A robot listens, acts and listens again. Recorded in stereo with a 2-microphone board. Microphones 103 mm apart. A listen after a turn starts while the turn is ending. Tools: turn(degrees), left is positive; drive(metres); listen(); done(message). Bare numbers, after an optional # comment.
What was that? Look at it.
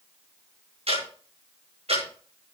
turn(-90)
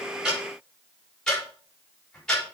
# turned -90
done("Facing the ticking.")